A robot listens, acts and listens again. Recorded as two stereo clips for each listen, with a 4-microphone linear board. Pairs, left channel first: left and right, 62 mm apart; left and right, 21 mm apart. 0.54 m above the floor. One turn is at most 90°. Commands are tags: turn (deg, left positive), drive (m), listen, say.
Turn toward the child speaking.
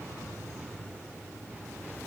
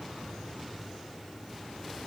<listen/>
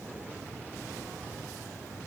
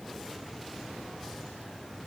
<listen/>
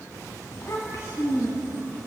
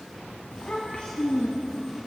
<turn deg="55"/>
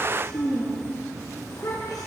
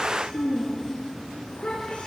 <turn deg="75"/>
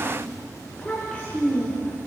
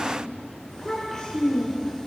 <turn deg="20"/>
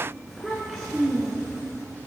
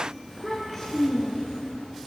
<say>Facing the child speaking.</say>